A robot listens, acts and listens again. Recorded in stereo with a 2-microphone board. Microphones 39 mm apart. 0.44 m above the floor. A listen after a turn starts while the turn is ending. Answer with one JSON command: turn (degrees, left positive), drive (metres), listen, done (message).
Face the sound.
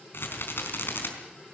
{"turn": 70}
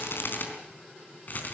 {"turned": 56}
{"turn": 50}
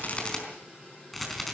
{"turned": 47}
{"done": "Found it: a rattle, straight ahead."}